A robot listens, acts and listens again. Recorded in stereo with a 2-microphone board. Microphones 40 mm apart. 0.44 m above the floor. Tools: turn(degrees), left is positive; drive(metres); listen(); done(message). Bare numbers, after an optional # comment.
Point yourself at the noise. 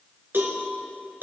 # The cowbell: about 60° right or 120° right.
turn(-60)
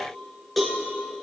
done("Found it: a cowbell, straight ahead.")